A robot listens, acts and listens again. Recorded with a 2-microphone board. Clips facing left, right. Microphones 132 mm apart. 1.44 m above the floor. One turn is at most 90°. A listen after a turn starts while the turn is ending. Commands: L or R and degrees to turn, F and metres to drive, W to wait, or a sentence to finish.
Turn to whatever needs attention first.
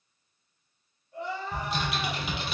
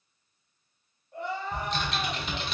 R55
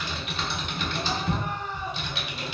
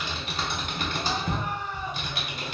Found it: crying, straight ahead.